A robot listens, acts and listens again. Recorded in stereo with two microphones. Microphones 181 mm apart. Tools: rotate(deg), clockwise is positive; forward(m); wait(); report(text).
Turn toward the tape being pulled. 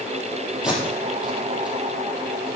rotate(30)
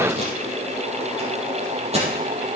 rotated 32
rotate(145)
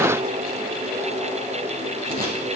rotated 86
rotate(55)
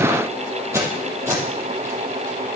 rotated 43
rotate(15)
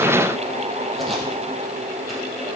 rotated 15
wait()
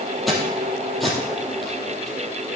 report("Facing the tape being pulled, over 4 m away.")